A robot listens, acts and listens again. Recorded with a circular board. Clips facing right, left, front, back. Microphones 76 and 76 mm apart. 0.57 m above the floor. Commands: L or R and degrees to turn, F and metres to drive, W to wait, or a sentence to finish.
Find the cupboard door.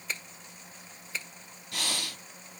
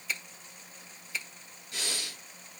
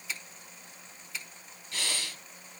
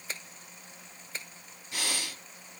W
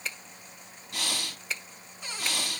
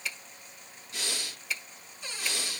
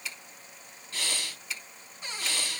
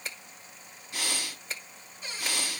R55
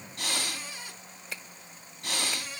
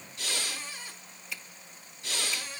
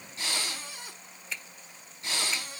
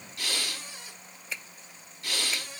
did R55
R10
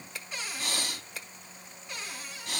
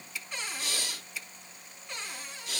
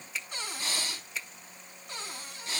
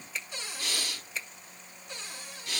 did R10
Facing the cupboard door.